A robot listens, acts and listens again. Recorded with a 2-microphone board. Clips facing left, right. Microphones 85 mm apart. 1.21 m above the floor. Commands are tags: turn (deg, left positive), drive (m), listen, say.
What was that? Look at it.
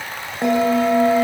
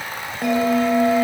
<turn deg="25"/>
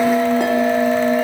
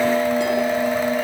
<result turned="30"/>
<turn deg="125"/>
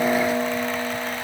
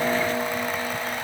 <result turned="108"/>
<turn deg="20"/>
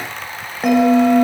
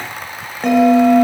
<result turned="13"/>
<say>Found it: a bell, straight ahead.</say>